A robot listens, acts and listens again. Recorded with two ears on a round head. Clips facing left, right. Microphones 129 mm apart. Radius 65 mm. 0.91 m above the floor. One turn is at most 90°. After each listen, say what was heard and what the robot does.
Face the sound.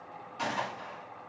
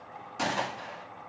The gunshot: about 60° right or 120° right. Turn 60° right.
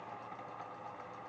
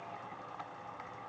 Keep listening.
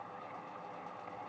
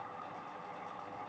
I heard a gunshot, but can't make it out now. It was about straight ahead or 60° right.